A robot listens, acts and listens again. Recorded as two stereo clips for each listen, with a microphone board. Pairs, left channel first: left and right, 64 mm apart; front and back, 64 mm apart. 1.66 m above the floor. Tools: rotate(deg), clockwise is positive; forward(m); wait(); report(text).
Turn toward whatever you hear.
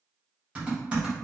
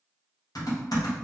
rotate(15)
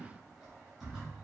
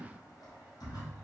report("Found it: typing on a keyboard, straight ahead.")